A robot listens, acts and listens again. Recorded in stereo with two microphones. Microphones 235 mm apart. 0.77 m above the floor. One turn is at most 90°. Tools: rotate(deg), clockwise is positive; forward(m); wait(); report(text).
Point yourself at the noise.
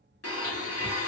rotate(-90)
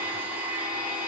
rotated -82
report("Facing the blender.")